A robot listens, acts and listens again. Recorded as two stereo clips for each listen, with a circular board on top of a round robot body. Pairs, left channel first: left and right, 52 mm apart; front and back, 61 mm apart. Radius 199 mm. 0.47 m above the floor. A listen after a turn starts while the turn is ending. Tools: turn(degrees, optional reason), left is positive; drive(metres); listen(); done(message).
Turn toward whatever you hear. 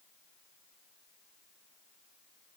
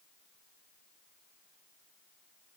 listen()
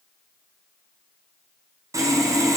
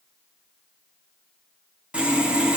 turn(degrees=-105, reason="The sawing: 105° right.")
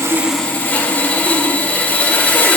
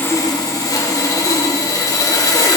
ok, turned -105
turn(degrees=25, reason="The sawing is now 25° left.")
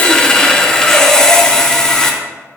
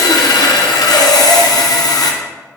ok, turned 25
turn(degrees=10, reason="The sawing is now 10° left.")
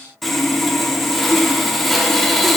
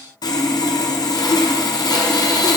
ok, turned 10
done("Facing the sawing.")